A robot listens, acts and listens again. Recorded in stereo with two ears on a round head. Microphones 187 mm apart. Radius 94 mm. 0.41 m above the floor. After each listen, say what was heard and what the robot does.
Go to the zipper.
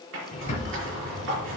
The zipper: about 65° right or 115° right. Turn 65° right.
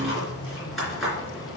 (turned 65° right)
Drive 1.0 m forward.
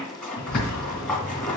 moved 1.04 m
Drive 1.0 m forward.
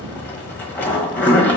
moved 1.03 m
The zipper is now 10° left. Turn 10° left.
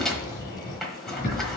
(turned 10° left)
Drive 1.0 m forward.
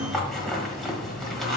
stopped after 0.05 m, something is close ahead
Arrived at the zipper, straight ahead.